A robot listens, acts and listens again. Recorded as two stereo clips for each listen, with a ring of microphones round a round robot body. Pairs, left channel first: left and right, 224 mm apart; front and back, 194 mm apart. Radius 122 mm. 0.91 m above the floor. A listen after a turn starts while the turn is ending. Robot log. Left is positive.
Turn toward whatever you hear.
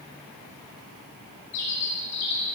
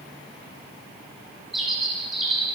note: The bird: 90° left.
cmd yaw +90
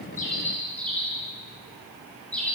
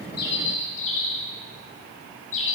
end: Facing the bird.